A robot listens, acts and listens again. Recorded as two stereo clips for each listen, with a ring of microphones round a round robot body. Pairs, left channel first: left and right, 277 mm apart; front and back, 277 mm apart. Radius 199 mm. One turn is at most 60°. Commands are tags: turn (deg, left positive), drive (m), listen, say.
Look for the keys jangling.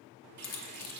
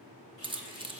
<turn deg="60"/>
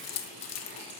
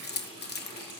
<turn deg="60"/>
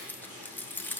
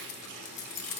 <say>Facing the keys jangling.</say>